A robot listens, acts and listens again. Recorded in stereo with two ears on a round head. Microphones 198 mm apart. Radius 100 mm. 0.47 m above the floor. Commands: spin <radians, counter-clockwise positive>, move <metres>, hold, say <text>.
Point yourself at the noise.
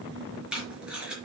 spin -0.52
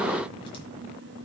hold
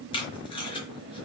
spin 0.44
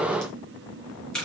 say Found it: tape being pulled, straight ahead, over 4 m away.